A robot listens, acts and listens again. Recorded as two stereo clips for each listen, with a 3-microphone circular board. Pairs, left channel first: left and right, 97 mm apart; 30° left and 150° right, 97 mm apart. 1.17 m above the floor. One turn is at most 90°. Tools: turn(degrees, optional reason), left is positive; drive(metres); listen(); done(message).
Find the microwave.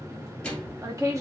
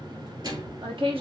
turn(degrees=90, reason="The microwave: 170° left.")
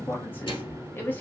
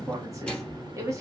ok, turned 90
turn(degrees=90, reason="The microwave is now 115° left.")
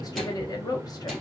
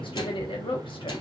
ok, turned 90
turn(degrees=25, reason="Nothing new. It was at 25° left.")
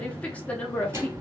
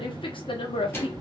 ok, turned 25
turn(degrees=-30, reason="The microwave is now 30° right.")
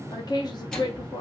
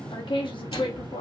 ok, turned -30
turn(degrees=10, reason="The microwave is now 10° left.")
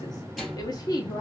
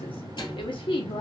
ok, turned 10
done("Facing the microwave, 2 to 4 m away.")